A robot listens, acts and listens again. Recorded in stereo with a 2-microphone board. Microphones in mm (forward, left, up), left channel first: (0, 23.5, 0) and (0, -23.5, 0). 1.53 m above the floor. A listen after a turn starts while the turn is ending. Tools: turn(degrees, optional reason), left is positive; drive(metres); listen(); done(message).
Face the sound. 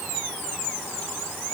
listen()
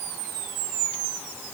listen()
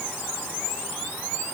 done("I can't make out anything.")